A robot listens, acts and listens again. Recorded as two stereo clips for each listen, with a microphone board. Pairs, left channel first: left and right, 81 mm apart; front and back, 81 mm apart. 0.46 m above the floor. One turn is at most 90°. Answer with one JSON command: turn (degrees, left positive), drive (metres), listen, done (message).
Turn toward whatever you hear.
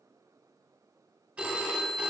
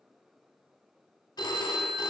{"turn": -20}
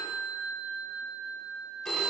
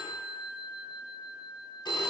{"done": "Found it: a phone ringing, straight ahead, 1 to 2 m away."}